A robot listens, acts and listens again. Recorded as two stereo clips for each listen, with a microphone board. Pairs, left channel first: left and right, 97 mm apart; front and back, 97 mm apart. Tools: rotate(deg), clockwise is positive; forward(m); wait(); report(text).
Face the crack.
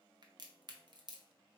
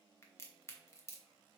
rotate(55)
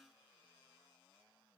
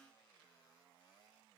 report("I heard a crack from this way, but can't make it out now.")